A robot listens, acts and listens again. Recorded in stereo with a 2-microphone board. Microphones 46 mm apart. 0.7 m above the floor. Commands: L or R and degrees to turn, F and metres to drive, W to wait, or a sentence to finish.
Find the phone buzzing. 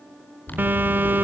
R45
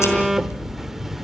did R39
Facing the phone buzzing.